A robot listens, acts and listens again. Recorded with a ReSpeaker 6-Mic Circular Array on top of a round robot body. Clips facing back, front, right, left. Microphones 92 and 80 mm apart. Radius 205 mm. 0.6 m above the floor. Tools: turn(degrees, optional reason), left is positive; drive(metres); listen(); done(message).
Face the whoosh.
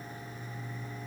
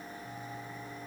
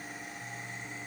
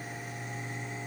listen()
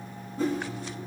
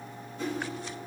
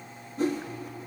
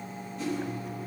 turn(degrees=-135, reason="The whoosh: 135° right.")
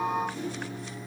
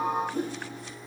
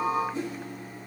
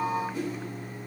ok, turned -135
turn(degrees=-30, reason="The whoosh is now 30° right.")
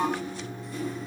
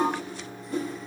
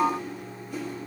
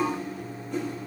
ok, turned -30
done("Facing the whoosh, 1 to 2 m away.")